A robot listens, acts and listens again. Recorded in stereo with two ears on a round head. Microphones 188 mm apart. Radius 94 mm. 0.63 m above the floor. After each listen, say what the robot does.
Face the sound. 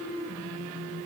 Keep listening.
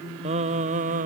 Turn 40° right.
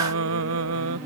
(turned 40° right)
Turn 100° right.
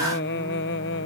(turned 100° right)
Turn 60° left.
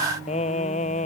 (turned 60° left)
Turn 35° left.
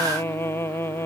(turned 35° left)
Turn 10° left.
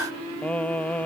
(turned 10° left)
Facing the singing.